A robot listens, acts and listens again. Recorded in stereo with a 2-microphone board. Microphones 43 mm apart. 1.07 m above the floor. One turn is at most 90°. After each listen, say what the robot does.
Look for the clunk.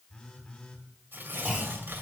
Turn 15° right.
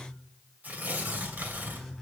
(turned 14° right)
Keep listening.
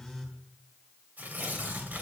I heard a clunk, but can't make it out now. It was about 5° right or 150° right.